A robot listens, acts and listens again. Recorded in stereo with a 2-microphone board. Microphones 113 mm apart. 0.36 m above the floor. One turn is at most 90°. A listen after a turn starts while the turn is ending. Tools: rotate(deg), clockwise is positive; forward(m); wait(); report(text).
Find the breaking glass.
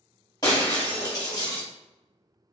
rotate(-35)
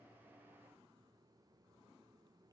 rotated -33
wait()
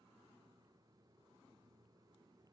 report("I heard breaking glass, but can't make it out now. It was about 5° left or 110° left.")